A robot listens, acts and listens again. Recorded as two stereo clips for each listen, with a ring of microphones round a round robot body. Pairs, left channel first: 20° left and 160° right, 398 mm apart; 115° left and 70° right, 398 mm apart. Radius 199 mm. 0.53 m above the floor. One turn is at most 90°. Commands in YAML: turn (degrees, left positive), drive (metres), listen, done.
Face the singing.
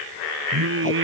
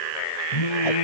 turn: 90
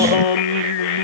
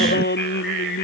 turn: 45
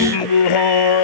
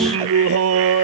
turn: -10
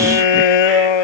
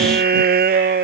done: "Facing the singing."